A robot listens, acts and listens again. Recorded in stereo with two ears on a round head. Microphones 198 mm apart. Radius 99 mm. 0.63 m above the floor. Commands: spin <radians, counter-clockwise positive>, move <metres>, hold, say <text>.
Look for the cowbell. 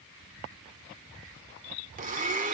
hold
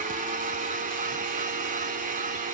hold
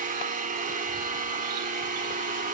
say I can't make out a cowbell, only a blender.